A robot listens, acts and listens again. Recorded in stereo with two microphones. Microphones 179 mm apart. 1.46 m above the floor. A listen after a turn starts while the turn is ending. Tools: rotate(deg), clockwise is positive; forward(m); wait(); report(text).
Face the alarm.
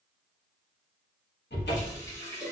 wait()
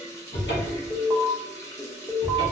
rotate(30)
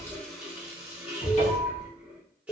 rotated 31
rotate(-20)
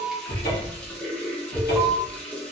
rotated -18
report("Found it: an alarm, straight ahead.")